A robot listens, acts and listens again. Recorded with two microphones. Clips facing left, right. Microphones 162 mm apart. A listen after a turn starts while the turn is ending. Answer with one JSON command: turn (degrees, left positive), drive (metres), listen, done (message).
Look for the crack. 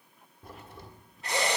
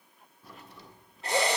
{"turn": 50}
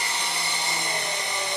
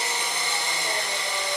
{"listen": true}
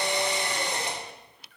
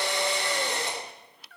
{"done": "I heard a crack, but can't make it out now. It was about straight ahead or 80° left."}